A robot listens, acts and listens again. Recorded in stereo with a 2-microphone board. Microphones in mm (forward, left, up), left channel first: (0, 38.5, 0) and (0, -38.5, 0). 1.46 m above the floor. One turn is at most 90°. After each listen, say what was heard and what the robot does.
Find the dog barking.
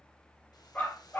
The dog barking: about 20° left or 160° left. Turn 20° left.
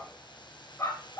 The dog barking: about 40° left or 140° left. Turn 40° left.
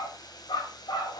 So it is at 105° left. Turn 90° left.
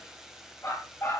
The dog barking is now 35° left. Turn 35° left.
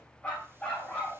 The dog barking is now 15° left. Turn 15° left.
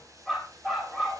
Found it: a dog barking, straight ahead, over 4 m away.